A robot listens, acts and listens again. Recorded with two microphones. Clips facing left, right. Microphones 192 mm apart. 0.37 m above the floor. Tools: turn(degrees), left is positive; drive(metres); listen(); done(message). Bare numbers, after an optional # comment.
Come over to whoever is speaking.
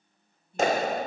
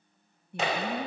# The woman speaking: about 65° right or 115° right.
turn(-65)
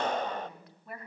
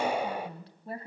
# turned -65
# So it is at 35° right.
turn(-35)
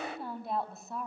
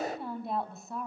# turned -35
drive(1.0)
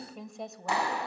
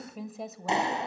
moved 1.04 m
drive(1.0)
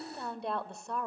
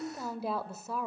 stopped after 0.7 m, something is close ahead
done("I am next to the woman speaking.")